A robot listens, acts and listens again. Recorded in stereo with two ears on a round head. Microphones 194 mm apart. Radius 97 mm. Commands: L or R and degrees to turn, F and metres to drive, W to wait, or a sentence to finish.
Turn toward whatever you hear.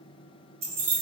R45
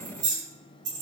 R110
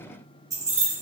R25
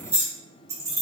R15
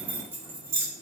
R15
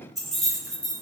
Facing the keys jangling.